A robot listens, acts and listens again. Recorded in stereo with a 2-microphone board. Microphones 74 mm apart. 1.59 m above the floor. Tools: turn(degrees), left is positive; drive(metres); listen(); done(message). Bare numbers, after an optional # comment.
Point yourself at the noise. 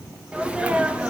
# The sneeze: about 15° right or 165° right.
turn(-15)
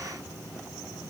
listen()
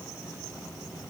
done("I heard a sneeze, but can't make it out now. It was about straight ahead or 150° right.")